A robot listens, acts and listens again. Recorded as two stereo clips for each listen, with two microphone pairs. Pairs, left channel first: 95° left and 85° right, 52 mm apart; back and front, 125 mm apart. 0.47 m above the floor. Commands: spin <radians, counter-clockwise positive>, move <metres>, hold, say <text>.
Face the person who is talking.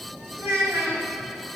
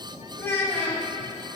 spin -1.92
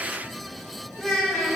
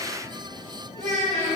say Found it: a child speaking, straight ahead, 2 to 4 m away.